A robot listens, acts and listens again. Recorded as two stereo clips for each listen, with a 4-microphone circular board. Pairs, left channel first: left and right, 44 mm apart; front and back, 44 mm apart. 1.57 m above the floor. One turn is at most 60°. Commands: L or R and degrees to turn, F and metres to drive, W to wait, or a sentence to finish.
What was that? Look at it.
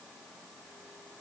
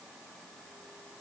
W
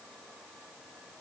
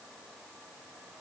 W
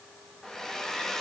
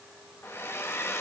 L15
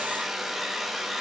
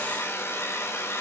Facing the hair dryer.